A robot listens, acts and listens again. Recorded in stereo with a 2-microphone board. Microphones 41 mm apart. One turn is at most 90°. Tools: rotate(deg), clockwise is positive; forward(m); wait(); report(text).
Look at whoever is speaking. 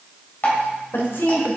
rotate(-70)
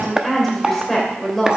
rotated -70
report("Facing the woman speaking.")